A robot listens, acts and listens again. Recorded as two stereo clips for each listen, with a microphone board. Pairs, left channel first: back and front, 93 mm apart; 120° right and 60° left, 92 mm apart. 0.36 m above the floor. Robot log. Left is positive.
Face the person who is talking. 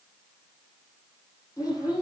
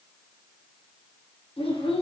note: The child speaking: 130° right.
cmd yaw -130
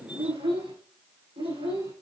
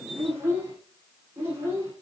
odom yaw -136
end: Facing the child speaking.